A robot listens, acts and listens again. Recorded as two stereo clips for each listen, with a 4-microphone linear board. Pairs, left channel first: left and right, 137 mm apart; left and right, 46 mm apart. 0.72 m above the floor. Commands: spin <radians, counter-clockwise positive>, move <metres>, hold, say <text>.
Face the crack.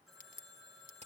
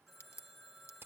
spin 1.57
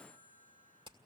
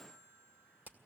say I heard a crack from this way, but can't make it out now.